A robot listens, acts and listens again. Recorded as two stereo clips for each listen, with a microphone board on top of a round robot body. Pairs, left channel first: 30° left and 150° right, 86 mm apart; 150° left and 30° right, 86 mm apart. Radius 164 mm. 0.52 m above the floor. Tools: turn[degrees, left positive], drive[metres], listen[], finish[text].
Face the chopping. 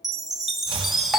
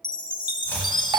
Thought: The chopping: 140° right.
Action: turn[-140]
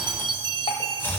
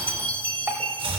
Thought: The chopping is now 35° right.
Action: turn[-35]
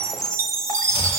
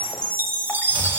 Action: listen[]
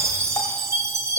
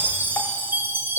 Action: listen[]
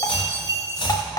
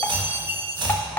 Action: finish[Facing the chopping, 1 to 2 m away.]